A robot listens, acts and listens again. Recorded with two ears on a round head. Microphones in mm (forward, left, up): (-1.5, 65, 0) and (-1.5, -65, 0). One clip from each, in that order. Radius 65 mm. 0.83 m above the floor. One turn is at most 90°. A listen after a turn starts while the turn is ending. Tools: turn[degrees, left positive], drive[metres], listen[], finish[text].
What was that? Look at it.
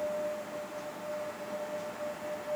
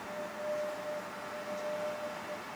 Action: listen[]
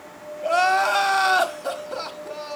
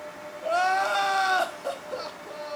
Thought: The crying: about 15° left or 165° left.
Action: turn[15]
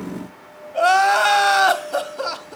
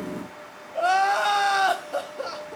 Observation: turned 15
Thought: So it is at 150° left.
Action: turn[90]
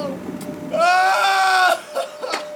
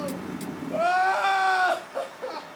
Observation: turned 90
Thought: The crying is now 90° left.
Action: turn[90]
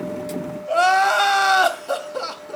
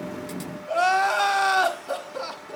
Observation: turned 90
Thought: The crying is now 15° left.
Action: turn[15]
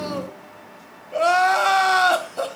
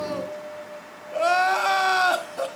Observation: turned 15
Action: finish[Facing the crying, 1 to 2 m away.]